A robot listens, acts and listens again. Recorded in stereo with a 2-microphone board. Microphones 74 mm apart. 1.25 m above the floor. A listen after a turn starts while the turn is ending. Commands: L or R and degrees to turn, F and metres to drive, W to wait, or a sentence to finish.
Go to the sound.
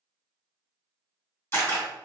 L35
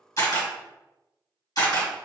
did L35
L110
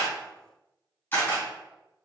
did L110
L30
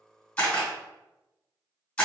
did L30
L15
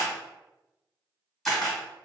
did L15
F1.0
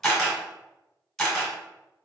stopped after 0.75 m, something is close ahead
Arrived at the camera shutter, straight ahead.